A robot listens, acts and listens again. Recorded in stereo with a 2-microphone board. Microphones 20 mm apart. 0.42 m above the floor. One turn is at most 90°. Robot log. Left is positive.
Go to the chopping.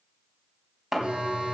note: The chopping: about 30° right or 150° right.
cmd yaw -30
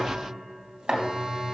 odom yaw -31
note: So it is at 120° right.
cmd yaw -90
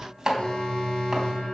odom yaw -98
note: The chopping is now 20° right.
cmd yaw -20
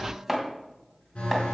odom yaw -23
cmd fwd 1.0
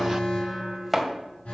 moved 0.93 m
cmd fwd 1.0
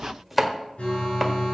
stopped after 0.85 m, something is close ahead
end: Arrived at the chopping, straight ahead.